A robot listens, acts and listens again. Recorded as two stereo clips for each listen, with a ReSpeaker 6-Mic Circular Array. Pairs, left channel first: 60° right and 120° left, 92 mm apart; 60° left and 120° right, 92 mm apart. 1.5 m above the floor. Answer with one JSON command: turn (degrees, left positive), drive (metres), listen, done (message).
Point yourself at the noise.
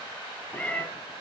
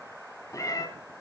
{"turn": 15}
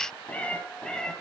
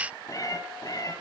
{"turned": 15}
{"turn": 20}
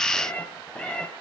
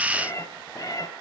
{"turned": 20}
{"turn": 20}
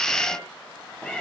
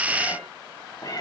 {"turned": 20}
{"turn": 20}
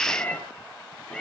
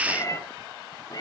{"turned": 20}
{"turn": 20}
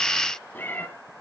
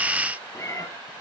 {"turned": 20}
{"done": "Facing the cat meowing, 2 to 4 m away."}